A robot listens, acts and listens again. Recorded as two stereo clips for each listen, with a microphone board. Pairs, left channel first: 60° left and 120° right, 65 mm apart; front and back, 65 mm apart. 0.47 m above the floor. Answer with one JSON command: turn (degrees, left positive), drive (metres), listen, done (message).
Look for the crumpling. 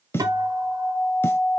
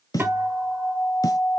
{"listen": true}
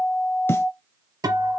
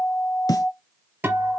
{"listen": true}
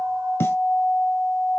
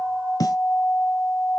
{"done": "I can't make out crumpling to turn to."}